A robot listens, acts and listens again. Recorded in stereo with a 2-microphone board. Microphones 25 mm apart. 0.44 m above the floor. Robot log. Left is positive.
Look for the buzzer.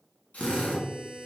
note: The buzzer: about 30° right or 150° right.
cmd yaw -30
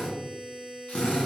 note: So it is at 115° right.
cmd yaw -115
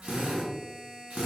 end: Found it: a buzzer, straight ahead.